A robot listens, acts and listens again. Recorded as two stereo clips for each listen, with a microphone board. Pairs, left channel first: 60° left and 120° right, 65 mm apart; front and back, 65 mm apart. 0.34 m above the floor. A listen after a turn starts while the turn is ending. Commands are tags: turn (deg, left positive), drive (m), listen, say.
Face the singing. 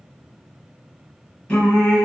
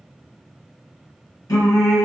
<turn deg="-15"/>
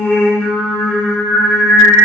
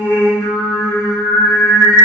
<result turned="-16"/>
<turn deg="-35"/>
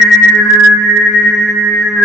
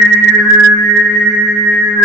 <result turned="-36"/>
<turn deg="-30"/>
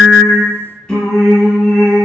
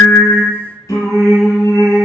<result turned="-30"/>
<turn deg="-15"/>
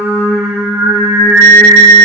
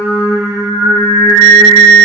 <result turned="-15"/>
<say>Found it: singing, straight ahead.</say>